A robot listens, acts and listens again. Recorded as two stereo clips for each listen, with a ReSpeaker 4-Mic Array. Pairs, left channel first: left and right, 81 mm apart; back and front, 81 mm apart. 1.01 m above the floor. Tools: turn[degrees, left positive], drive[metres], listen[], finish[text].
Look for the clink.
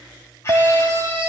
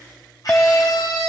Thought: The clink: 110° right.
Action: turn[-110]
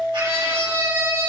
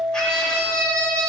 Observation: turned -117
Action: finish[Facing the clink.]